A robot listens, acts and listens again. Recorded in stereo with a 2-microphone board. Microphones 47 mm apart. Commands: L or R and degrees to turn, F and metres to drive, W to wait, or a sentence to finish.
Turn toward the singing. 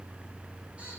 W
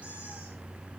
W
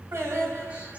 R70
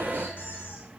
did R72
W
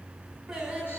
R10
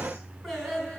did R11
Found it: singing, straight ahead, over 4 m away.